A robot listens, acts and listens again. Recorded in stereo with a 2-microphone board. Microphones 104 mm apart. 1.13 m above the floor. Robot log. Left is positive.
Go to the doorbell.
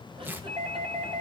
cmd yaw -90
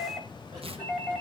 cmd fwd 1.0
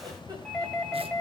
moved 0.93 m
cmd fwd 1.0
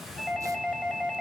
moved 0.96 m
cmd fwd 1.0
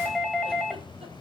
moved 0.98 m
cmd fwd 1.0
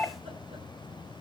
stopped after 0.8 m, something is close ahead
end: I am next to the doorbell.